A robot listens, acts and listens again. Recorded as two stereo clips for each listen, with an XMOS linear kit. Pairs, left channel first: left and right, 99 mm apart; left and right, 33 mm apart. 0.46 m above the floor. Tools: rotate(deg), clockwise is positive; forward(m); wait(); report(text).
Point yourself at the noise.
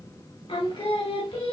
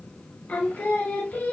rotate(-90)
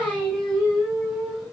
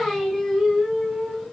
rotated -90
report("Found it: singing, straight ahead, over 4 m away.")